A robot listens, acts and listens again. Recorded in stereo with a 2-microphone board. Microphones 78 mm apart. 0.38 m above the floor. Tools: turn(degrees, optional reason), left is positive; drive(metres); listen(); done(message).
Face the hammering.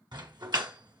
turn(degrees=-60, reason="The hammering: about 60° right or 120° right.")
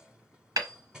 turn(degrees=-55, reason="So it is at 55° right.")
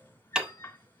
turn(degrees=-10, reason="The hammering is now 10° right.")
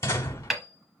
done("Found it: hammering, straight ahead.")